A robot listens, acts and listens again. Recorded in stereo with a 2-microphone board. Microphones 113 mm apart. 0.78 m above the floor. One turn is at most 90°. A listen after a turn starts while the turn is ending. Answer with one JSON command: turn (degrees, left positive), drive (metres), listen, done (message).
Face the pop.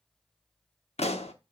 {"turn": 90}
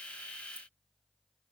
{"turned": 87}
{"done": "Facing where the pop came from. I can't hear it now."}